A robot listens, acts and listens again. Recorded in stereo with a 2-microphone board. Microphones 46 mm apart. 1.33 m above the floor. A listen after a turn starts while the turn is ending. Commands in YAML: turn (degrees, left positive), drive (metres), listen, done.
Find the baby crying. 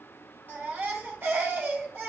turn: -45
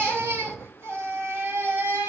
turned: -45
turn: -85
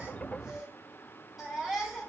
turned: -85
turn: -10
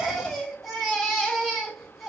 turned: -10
done: "Found it: a baby crying, straight ahead, 2 to 4 m away."